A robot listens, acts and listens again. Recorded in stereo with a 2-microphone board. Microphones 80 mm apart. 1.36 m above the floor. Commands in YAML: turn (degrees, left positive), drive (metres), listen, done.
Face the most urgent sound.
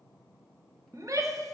turn: -40
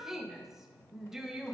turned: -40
done: "Found it: a shout, straight ahead, under 1 m away."